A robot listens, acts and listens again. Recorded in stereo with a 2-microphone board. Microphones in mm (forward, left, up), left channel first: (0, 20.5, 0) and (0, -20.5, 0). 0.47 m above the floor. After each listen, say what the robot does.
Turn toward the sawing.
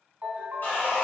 Turn 50° left.
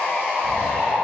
Turn 70° left.
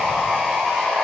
Found it: sawing, straight ahead, 1 to 2 m away.